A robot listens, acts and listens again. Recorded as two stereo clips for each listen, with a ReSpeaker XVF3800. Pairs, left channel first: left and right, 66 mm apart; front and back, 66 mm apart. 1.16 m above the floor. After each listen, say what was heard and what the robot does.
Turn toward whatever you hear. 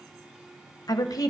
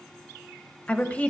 The woman speaking: 65° left. Turn 65° left.
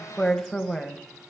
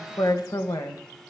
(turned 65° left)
The woman speaking is now 10° left. Turn 10° left.
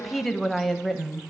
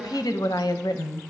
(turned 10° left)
Facing the woman speaking, 1 to 2 m away.